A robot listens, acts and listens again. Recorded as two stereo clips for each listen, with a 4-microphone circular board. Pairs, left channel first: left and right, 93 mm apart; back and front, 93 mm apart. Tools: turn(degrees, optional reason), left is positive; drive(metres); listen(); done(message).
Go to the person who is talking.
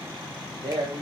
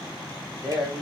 turn(degrees=-80, reason="The man speaking: 80° right.")
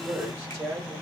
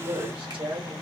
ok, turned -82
drive(metres=1.0)
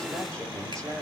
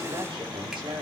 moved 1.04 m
drive(metres=1.0)
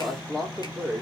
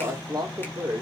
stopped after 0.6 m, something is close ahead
done("Arrived at the man speaking, straight ahead.")